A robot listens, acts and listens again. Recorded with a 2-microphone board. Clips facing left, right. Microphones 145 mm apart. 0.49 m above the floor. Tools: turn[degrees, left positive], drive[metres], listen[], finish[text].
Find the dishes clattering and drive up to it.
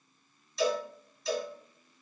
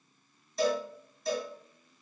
Action: listen[]
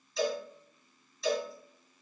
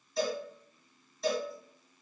Action: listen[]
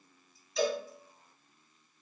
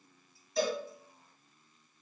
Action: finish[I can't make out dishes clattering to turn to.]